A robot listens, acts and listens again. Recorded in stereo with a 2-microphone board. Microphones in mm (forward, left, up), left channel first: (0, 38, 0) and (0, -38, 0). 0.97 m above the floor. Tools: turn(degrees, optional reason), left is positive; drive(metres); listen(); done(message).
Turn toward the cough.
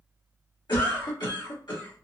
turn(degrees=75, reason="The cough: about 75° left or 105° left.")
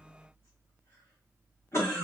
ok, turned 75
turn(degrees=35, reason="So it is at 35° left.")
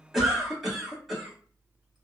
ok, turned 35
done("Facing the cough, 1 to 2 m away.")